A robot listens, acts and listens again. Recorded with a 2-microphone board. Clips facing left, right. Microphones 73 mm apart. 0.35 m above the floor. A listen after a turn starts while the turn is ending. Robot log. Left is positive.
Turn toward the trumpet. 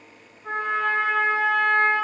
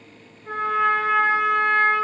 cmd yaw +90
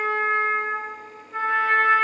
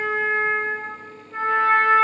end: Found it: a trumpet, straight ahead, 1 to 2 m away.